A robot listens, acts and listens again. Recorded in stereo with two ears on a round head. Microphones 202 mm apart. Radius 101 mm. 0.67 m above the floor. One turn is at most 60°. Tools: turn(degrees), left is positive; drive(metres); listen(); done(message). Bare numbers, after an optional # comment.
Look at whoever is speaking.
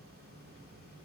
listen()
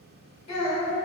# The child speaking: about 25° left or 155° left.
turn(25)
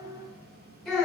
done("Found it: a child speaking, straight ahead.")